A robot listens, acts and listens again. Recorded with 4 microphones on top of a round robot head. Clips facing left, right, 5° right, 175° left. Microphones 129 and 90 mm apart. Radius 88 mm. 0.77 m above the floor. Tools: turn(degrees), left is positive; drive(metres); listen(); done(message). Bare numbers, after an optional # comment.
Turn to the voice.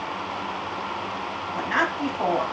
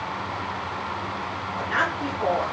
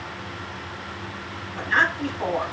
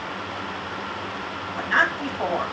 # The woman speaking: 125° left.
turn(125)
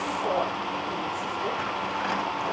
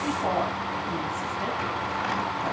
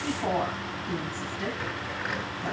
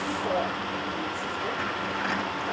# The woman speaking is now 25° right.
turn(-25)
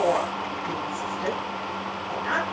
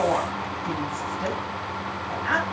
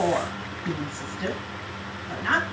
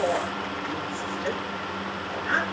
done("Found it: a woman speaking, straight ahead, over 4 m away.")